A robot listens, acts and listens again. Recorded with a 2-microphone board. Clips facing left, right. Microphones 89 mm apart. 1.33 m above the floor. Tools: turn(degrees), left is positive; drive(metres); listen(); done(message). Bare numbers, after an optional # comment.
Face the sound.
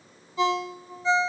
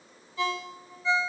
# The ringtone: about 25° left or 155° left.
turn(25)
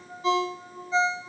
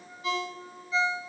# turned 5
# The ringtone: about 30° left or 150° left.
turn(30)
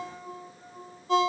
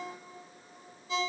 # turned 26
# So it is at 125° left.
turn(125)
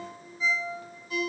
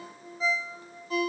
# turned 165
# The ringtone is now 40° right.
turn(-40)
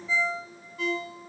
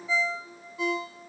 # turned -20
# The ringtone is now 20° right.
turn(-20)
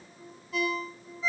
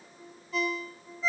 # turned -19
done("Found it: a ringtone, straight ahead.")